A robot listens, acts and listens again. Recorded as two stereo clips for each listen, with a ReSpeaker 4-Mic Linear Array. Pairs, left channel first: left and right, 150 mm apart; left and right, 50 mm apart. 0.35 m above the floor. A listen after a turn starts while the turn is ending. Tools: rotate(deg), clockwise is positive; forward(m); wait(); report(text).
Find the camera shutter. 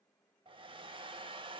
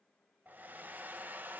wait()
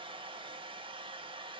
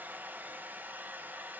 wait()
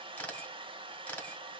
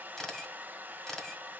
rotate(-30)
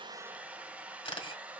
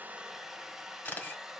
rotate(-140)
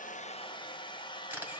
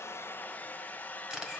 rotate(15)
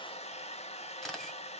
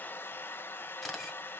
report("Found it: a camera shutter, straight ahead, 1 to 2 m away.")